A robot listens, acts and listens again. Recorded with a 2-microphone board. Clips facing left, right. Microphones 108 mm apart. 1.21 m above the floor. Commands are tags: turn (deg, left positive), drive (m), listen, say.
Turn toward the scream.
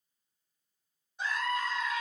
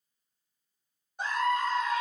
<turn deg="-55"/>
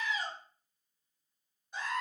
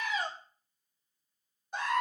<turn deg="-70"/>
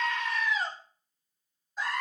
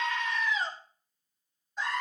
<say>Found it: a scream, straight ahead, 2 to 4 m away.</say>